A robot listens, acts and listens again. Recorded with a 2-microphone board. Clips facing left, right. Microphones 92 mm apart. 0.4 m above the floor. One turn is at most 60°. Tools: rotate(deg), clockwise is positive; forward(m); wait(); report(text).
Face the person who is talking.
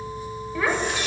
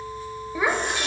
rotate(15)
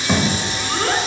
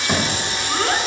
report("Found it: a child speaking, straight ahead.")